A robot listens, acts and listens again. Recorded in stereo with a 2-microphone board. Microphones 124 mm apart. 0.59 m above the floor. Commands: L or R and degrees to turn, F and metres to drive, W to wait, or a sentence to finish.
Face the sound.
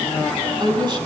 R35
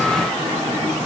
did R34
W
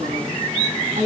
R105
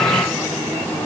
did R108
W
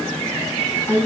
L20
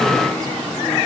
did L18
W
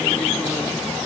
W
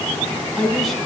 Facing the woman speaking.